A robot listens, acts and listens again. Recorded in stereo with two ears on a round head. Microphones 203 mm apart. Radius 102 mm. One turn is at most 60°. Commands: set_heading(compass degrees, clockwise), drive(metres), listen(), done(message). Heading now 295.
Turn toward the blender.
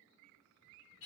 listen()
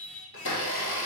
set_heading(235)
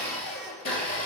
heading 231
set_heading(191)
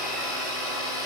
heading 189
done("Facing the blender, 1 to 2 m away.")